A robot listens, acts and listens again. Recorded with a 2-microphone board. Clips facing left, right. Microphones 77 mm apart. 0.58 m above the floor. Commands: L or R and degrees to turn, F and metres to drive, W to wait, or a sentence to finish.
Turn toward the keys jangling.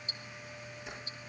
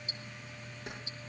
R60
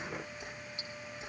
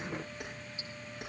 R60
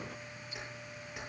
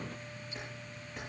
L10
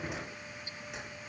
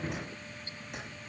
W
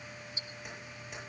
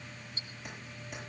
W
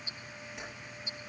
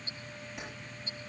I heard keys jangling from this way, but can't make it out now.